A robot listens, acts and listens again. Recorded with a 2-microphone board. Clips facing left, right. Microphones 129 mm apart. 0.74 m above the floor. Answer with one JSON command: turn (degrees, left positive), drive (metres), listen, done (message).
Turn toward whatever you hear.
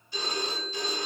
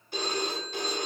{"turn": -60}
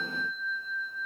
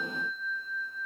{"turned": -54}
{"turn": -10}
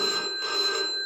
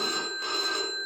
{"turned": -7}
{"done": "Facing the phone ringing."}